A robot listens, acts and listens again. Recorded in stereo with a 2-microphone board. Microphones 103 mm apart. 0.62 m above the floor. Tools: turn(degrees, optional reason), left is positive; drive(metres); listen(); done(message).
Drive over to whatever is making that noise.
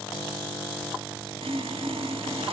turn(degrees=-90)
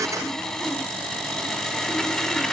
drive(metres=1.0)
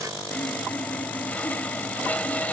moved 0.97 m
turn(degrees=15, reason="The sawing is now 15° left.")
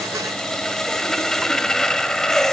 drive(metres=1.0)
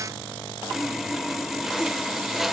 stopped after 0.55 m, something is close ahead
done("I am next to the sawing.")